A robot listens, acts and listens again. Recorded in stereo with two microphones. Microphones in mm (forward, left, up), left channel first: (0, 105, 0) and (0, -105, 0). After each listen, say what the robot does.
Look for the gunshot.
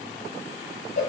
Keep listening.
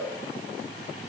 Keep listening.
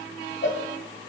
I can't make out a gunshot to turn to.